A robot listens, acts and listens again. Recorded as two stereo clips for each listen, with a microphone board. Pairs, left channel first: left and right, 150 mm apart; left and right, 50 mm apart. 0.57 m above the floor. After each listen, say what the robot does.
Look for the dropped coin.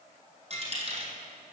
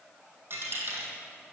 Turn 45° right.
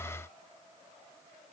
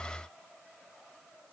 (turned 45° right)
Keep listening.
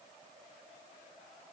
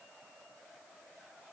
I heard a dropped coin, but can't make it out now. It was about straight ahead or 90° right.